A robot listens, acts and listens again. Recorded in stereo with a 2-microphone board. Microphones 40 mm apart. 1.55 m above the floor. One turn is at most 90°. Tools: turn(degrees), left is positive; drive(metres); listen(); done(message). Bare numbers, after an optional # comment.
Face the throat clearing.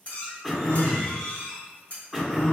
turn(30)
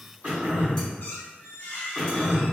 # So it is at 30° right.
turn(-30)
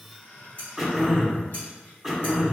done("Facing the throat clearing, 1 to 2 m away.")